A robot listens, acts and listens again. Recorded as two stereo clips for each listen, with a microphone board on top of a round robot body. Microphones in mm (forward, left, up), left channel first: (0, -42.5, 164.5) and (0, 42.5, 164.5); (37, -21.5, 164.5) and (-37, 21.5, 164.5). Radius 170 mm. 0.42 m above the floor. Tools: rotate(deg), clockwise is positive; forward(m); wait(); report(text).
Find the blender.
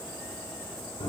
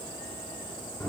wait()
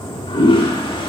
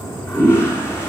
wait()
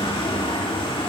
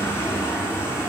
report("I can't make out a blender to turn to.")